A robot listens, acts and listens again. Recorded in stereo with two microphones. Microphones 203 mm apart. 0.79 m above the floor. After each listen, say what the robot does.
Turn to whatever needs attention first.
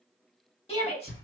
Turn 30° left.
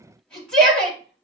Found it: a shout, straight ahead, 1 to 2 m away.